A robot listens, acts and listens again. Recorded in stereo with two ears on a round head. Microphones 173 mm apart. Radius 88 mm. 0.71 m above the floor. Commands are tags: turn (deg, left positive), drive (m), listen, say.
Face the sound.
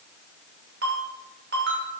<turn deg="-55"/>
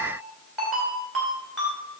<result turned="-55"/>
<say>Facing the ringtone.</say>